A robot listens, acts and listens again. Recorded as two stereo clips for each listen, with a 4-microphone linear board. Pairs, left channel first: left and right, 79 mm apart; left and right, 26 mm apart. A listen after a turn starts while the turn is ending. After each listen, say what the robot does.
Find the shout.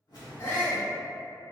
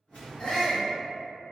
Turn 30° left.
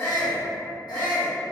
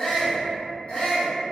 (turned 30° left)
Turn 120° left.
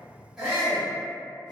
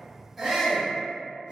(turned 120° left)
Turn 20° right.
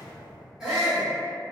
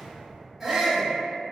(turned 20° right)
Found it: a shout, straight ahead.